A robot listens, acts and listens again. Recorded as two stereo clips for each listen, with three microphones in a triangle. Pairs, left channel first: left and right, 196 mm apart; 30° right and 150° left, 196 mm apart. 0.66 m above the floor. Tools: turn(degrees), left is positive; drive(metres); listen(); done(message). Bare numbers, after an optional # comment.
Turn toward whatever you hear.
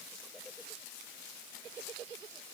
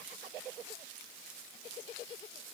listen()
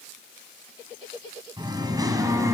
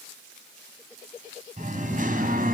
# The singing: 165° right.
turn(-165)
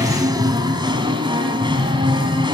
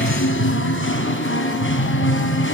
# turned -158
# The singing is now 20° right.
turn(-20)
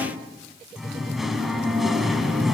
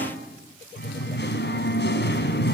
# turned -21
done("Facing the singing, 2 to 4 m away.")